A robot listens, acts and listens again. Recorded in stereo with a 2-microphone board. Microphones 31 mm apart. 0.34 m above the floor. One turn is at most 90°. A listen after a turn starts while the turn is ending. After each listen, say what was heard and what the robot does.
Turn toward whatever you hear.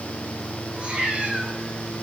The cat meowing: about 45° right or 135° right. Turn 45° right.
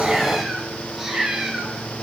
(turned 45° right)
So it is at 15° right. Turn 15° right.
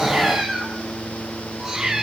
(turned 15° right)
The cat meowing is now 20° right. Turn 20° right.
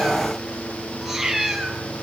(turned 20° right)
The cat meowing is now 15° right. Turn 15° right.
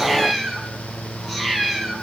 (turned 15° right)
Found it: a cat meowing, straight ahead, 2 to 4 m away.